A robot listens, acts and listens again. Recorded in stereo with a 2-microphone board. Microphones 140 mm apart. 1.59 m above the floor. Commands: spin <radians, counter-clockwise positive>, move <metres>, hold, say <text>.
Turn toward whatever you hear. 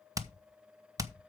spin -0.44
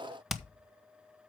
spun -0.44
say Facing the hammering, 1 to 2 m away.